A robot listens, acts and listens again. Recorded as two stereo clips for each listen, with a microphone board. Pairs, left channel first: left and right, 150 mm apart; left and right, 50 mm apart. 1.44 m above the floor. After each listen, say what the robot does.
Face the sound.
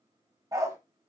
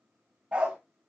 Turn 20° right.
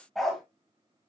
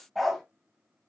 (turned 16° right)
Turn 30° left.
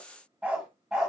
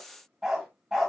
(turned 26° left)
Found it: a dog barking, straight ahead, 2 to 4 m away.